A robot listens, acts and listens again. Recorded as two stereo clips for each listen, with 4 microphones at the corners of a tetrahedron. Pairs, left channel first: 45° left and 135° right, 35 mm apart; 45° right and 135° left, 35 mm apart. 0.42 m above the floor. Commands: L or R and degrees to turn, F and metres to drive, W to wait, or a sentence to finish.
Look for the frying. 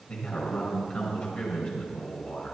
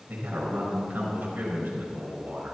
W
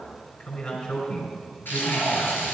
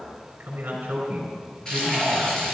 L25
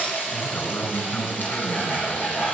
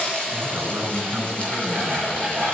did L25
L10
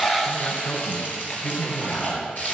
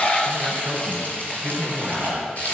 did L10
Found it: frying, straight ahead.